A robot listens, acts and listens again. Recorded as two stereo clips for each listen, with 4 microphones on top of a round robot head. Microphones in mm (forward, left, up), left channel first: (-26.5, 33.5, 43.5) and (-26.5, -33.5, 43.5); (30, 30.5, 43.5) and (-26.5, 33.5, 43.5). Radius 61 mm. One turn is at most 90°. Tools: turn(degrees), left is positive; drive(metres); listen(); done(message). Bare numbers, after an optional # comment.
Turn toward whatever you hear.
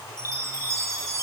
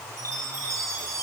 # The chime: 135° right.
turn(-90)
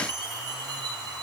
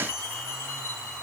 # The chime is now 60° right.
turn(-60)
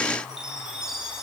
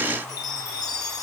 # The chime is now 10° right.
turn(-10)
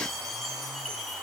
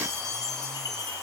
done("Facing the chime, over 4 m away.")